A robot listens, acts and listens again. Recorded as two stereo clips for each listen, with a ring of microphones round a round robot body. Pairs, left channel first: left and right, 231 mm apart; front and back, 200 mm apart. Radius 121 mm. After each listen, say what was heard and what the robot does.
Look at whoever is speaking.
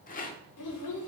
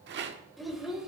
The child speaking: 90° left. Turn 90° left.
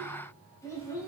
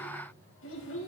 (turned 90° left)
The child speaking is now 15° left. Turn 15° left.
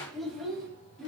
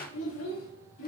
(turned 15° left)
Facing the child speaking.